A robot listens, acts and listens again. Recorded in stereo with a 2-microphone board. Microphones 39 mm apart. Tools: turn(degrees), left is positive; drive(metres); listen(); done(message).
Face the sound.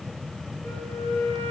turn(degrees=70)
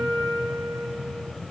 turn(degrees=35)
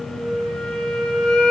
turn(degrees=15)
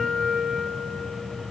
done("Found it: a flute, straight ahead.")